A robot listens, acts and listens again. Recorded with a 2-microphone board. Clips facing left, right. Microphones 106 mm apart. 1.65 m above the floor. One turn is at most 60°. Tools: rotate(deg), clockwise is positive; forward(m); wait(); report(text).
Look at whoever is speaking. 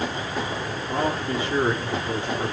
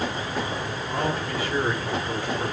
rotate(-25)
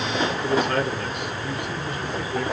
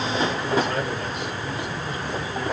rotate(-60)
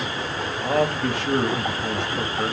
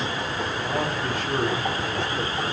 rotate(-60)
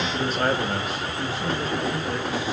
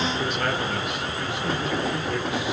rotate(-35)
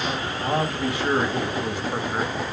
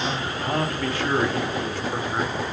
rotate(-15)
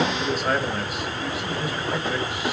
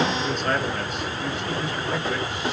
rotate(-10)
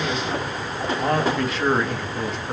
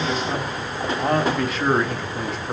report("Facing the man speaking.")